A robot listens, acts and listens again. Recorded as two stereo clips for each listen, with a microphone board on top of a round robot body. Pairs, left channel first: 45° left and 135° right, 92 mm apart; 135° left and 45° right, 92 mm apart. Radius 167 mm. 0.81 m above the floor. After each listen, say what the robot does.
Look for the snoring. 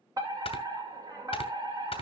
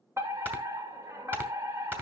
Turn 25° left.
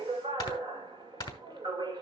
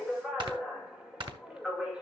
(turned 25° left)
Facing the snoring.